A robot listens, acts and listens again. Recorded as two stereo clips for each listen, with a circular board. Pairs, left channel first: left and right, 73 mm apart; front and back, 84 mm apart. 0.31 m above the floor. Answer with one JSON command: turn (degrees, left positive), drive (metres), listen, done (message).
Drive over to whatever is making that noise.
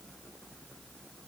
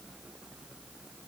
{"listen": true}
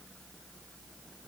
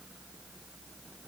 {"listen": true}
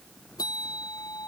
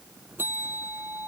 {"turn": 115}
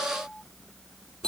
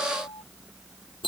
{"turn": 10}
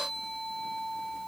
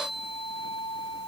{"drive": 1.0}
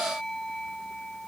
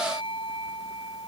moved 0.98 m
{"turn": 10}
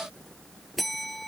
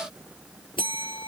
{"drive": 1.0}
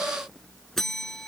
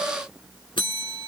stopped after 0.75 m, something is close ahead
{"done": "Arrived at the bell, straight ahead."}